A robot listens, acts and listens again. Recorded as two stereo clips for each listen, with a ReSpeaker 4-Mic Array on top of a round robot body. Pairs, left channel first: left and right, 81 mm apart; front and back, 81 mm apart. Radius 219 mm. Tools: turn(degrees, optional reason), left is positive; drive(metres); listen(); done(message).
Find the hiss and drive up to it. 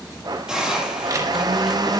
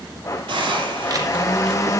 turn(degrees=-175, reason="The hiss: 175° right.")
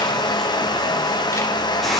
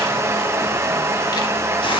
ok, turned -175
listen()
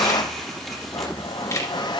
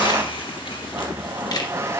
listen()
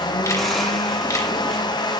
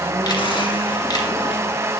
done("I heard a hiss from this way, but can't make it out now. I did not reach it.")